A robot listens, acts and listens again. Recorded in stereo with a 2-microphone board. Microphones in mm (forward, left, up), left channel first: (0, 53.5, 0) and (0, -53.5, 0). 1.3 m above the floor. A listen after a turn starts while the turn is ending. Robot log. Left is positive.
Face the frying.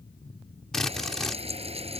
note: The frying: about 70° right or 110° right.
cmd yaw -70
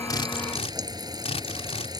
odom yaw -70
note: So it is at 40° right.
cmd yaw -40
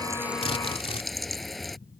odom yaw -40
end: Found it: frying, straight ahead.